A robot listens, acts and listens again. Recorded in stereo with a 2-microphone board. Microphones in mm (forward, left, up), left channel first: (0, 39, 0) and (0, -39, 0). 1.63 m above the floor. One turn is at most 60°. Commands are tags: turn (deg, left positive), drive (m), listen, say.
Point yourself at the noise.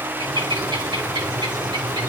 <turn deg="-60"/>
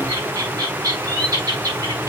<turn deg="-55"/>
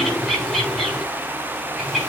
<say>Found it: a bird, straight ahead.</say>